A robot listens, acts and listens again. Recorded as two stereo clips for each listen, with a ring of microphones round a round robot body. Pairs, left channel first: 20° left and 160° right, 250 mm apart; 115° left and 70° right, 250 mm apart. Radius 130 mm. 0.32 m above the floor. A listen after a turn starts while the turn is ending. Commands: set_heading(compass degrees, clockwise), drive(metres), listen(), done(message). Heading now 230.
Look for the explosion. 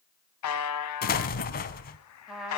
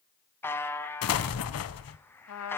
set_heading(150)
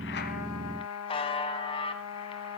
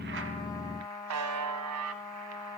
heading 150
done("Facing where the explosion came from. I can't hear it now.")